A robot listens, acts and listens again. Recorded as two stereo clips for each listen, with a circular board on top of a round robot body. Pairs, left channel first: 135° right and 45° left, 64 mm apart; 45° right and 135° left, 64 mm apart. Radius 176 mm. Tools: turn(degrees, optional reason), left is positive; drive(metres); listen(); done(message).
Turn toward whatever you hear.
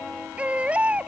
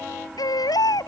turn(degrees=-25, reason="The baby crying: 25° right.")
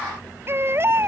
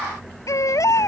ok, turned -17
done("Facing the baby crying.")